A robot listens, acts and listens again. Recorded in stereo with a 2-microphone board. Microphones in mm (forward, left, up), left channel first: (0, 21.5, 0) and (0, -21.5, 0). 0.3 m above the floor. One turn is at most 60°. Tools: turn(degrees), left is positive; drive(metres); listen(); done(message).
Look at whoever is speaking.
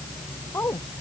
turn(degrees=60)
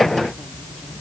turn(degrees=30)
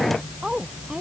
turn(degrees=-15)
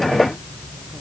listen()
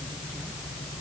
listen()
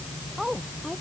turn(degrees=-10)
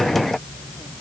listen()
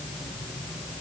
listen()
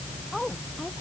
done("Facing the woman speaking.")